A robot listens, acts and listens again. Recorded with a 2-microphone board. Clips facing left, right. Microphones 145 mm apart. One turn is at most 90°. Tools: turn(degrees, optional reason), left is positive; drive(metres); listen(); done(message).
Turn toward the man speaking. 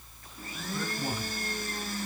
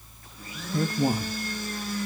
turn(degrees=-40, reason="The man speaking: about 40° right or 140° right.")
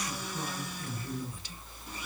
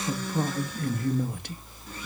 turn(degrees=-90, reason="So it is at 90° right.")
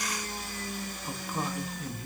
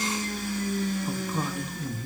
done("Found it: a man speaking, straight ahead, 1 to 2 m away.")